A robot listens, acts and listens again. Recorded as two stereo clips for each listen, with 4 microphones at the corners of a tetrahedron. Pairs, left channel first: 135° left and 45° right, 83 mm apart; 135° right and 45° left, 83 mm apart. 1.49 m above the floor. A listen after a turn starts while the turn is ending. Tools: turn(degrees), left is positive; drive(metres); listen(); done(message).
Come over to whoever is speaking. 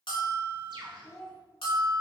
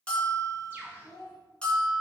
turn(degrees=-170)
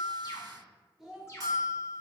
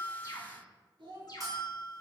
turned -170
turn(degrees=40)
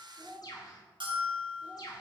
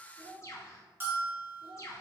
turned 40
turn(degrees=25)
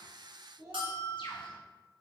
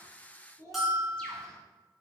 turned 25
drive(metres=1.0)
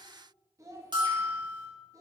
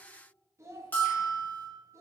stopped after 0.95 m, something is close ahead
done("I am next to the child speaking.")